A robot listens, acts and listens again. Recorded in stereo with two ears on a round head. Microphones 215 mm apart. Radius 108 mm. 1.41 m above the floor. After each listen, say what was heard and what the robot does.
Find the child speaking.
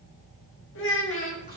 The child speaking: about 60° left or 120° left. Turn 60° left.
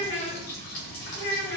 So it is at 45° left. Turn 45° left.
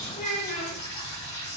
The child speaking is now 30° left. Turn 30° left.
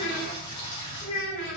The child speaking is now 35° left. Turn 35° left.
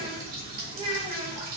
The child speaking is now 25° right. Turn 25° right.
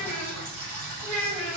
Found it: a child speaking, straight ahead.